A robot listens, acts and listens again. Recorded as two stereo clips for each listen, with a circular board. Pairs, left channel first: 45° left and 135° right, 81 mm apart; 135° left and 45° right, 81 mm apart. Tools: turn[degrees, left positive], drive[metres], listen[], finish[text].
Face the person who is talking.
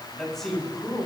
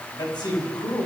Thought: The man speaking: 135° left.
Action: turn[135]
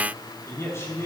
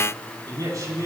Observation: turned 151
Action: finish[Found it: a man speaking, straight ahead, over 4 m away.]